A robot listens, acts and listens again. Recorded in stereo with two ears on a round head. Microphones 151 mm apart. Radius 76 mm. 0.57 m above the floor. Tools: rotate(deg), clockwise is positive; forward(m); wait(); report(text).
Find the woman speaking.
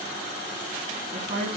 rotate(50)
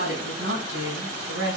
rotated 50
rotate(70)
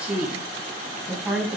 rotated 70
report("Found it: a woman speaking, straight ahead, over 4 m away.")